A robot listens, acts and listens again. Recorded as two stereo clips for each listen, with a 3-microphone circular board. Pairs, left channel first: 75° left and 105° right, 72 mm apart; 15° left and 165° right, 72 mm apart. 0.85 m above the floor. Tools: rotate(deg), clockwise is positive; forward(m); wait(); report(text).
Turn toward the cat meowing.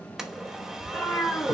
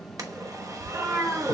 rotate(-150)
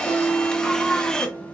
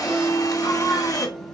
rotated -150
wait()
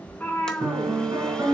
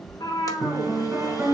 rotate(-10)
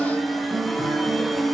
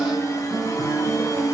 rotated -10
wait()
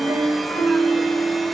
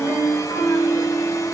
wait()
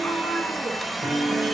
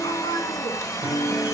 report("I heard a cat meowing from this way, but can't make it out now.")